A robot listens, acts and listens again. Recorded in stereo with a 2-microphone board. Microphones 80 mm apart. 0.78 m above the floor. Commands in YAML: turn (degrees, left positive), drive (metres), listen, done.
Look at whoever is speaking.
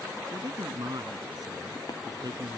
turn: -55
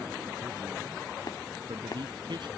turn: -70
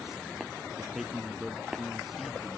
done: "Found it: a man speaking, straight ahead."